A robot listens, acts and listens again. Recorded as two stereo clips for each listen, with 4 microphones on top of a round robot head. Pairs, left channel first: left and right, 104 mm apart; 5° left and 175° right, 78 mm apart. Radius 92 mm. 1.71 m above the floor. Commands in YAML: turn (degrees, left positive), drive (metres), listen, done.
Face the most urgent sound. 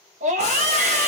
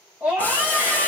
turn: -95
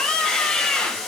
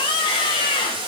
turn: 10
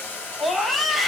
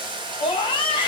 done: "Found it: a scream, straight ahead."